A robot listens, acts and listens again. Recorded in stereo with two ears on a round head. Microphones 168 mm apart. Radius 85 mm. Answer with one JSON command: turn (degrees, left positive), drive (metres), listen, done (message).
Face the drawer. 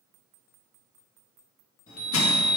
{"listen": true}
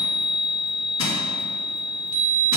{"listen": true}
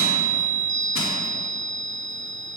{"done": "I can't make out a drawer, only a chime."}